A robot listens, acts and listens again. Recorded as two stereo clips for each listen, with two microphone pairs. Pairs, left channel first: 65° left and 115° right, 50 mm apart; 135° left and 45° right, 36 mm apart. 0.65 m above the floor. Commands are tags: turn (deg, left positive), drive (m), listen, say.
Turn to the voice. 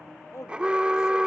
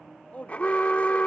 <turn deg="85"/>
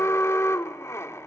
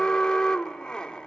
<listen/>
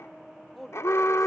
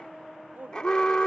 <turn deg="-25"/>
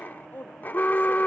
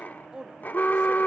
<turn deg="20"/>
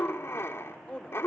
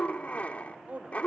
<say>Facing the woman speaking.</say>